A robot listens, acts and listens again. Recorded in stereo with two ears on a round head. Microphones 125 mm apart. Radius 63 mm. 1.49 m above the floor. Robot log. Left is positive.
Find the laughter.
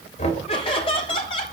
note: The laughter: about 40° left or 140° left.
cmd yaw +40
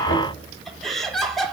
end: Facing the laughter.